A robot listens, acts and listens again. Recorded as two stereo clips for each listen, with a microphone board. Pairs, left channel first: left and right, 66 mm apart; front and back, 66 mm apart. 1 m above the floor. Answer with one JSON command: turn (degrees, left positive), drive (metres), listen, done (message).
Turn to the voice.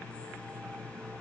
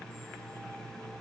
{"listen": true}
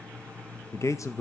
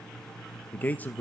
{"turn": 60}
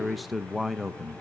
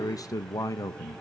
{"done": "Found it: a man speaking, straight ahead."}